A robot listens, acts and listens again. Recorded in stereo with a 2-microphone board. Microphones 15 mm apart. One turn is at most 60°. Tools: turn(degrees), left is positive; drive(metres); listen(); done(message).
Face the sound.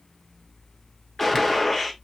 turn(degrees=30)
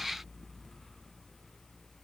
listen()
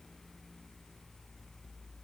done("I heard a gunshot, but can't make it out now. It was about 20° right or 140° left.")